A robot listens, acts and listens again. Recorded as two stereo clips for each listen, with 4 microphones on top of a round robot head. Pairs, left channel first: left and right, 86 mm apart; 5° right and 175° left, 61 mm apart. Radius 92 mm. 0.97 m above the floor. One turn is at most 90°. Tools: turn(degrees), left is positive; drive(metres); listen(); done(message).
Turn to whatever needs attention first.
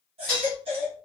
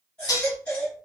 turn(degrees=-80)
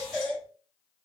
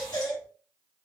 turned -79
done("Found it: a baby crying, straight ahead.")